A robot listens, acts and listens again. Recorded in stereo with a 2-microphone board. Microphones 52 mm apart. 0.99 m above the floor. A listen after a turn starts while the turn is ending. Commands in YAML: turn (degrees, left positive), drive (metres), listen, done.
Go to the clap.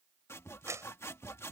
turn: -90
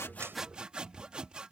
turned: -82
turn: -10
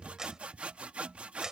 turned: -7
turn: -15
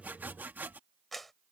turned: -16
drive: 1.0
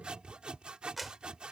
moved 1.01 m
drive: 1.0
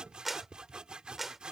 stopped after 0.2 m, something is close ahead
done: "Blocked. The clap is further on, straight ahead."